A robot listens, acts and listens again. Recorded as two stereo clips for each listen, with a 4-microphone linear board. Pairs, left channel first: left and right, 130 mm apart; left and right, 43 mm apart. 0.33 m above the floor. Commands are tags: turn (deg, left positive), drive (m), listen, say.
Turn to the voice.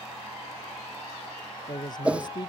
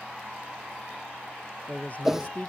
<turn deg="35"/>
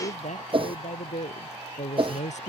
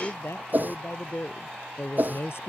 <turn deg="105"/>
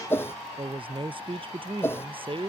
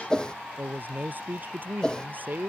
<turn deg="-45"/>
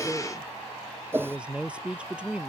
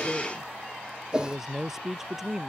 <turn deg="-10"/>
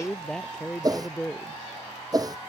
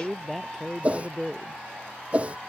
<say>Facing the man speaking.</say>